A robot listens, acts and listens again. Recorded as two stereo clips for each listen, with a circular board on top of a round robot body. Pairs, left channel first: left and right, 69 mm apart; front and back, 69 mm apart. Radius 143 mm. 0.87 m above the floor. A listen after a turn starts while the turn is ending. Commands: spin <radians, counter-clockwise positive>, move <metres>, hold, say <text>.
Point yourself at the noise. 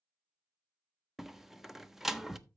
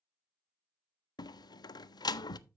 say Found it: a door slam, straight ahead, under 1 m away.